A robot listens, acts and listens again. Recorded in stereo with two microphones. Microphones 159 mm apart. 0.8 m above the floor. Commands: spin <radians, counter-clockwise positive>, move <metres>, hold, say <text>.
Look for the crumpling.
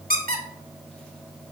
hold
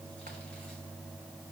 hold
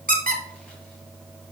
say I can't make out crumpling to turn to.